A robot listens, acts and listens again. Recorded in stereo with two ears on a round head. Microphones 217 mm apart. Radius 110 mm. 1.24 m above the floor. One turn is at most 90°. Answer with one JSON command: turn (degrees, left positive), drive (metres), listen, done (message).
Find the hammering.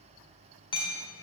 {"turn": 20}
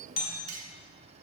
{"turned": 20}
{"turn": 90}
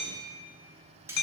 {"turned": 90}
{"turn": 80}
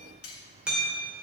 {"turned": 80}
{"done": "Facing the hammering, 2 to 4 m away."}